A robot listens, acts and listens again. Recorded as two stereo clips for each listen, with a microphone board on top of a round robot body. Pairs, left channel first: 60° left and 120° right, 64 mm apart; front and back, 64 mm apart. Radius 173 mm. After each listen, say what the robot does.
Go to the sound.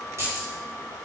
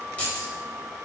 Turn 70° right.
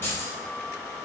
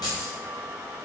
Drive 1.0 m forward.
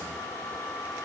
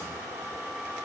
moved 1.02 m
Keep listening.
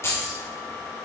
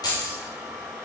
Turn 10° left.
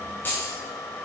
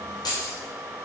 Drive 1.0 m forward.
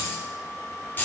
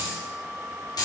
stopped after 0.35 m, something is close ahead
Something is in my way. I am facing the keys jangling but have not reached it.